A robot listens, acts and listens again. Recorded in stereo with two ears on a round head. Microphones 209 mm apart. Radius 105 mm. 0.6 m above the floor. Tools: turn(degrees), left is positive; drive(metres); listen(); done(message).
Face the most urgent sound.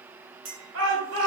turn(degrees=-60)
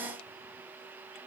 listen()
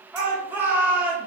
turn(degrees=-10)
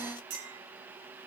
listen()
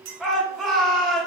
done("Facing the shout, 2 to 4 m away.")